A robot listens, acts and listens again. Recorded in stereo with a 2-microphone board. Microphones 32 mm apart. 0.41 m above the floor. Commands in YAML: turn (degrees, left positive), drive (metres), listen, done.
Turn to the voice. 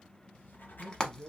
turn: 30
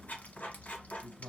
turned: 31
turn: -25
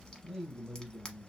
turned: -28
done: "Facing the man speaking, 1 to 2 m away."